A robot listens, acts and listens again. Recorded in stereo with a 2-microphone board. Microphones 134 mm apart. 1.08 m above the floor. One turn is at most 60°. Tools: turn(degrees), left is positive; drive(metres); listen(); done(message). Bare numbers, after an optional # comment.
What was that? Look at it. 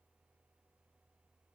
listen()
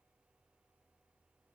listen()
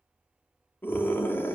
# The scream: about 15° left or 165° left.
turn(15)
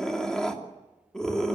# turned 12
done("Facing the scream.")